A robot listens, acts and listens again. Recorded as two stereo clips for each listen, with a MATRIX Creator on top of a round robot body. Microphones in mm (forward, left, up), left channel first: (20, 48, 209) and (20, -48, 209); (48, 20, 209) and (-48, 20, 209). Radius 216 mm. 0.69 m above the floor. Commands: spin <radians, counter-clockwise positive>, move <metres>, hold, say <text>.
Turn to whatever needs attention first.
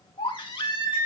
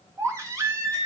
spin 2.18
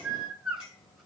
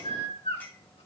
say Facing the baby crying.